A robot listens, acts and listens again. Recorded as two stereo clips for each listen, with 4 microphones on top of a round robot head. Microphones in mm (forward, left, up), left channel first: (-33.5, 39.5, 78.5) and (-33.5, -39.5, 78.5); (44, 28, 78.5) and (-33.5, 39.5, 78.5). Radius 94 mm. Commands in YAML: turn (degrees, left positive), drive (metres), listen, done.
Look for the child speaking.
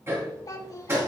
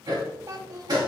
turn: 135
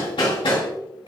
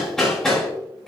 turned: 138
listen: true
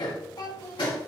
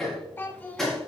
turn: 60
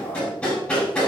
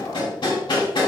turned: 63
listen: true
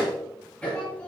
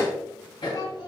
listen: true
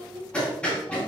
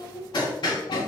turn: 15
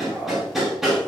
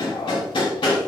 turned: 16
listen: true
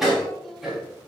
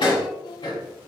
listen: true
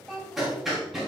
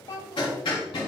done: "Facing the child speaking."